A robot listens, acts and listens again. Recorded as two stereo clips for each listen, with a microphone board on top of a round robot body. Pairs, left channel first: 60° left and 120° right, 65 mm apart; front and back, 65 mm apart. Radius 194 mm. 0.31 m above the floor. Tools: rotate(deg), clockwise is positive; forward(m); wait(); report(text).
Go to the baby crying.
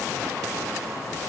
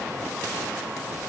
wait()
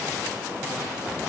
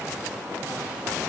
wait()
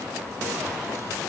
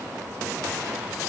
report("I can't make out a baby crying to turn to.")